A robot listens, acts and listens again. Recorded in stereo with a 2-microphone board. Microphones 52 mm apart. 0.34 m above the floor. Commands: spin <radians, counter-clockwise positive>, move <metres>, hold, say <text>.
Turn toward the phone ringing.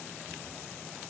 hold
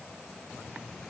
hold
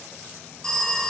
spin 0.52
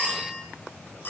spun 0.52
spin 2.36
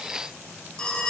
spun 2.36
spin 0.35
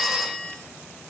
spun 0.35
say Found it: a phone ringing, straight ahead, 1 to 2 m away.